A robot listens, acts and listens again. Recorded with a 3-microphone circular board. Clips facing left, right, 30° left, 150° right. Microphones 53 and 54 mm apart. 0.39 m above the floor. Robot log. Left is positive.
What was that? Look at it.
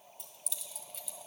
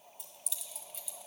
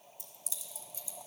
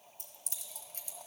note: The keys jangling: straight behind.
cmd yaw +180
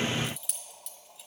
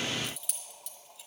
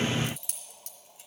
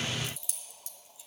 end: Facing the keys jangling.